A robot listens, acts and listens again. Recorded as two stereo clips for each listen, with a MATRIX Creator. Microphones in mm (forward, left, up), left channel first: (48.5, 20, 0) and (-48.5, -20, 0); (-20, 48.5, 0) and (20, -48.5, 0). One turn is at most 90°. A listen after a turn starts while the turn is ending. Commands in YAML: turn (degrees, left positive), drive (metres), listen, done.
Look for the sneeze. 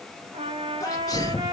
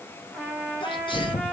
turn: 75
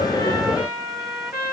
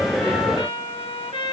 done: "I heard a sneeze from this way, but can't make it out now."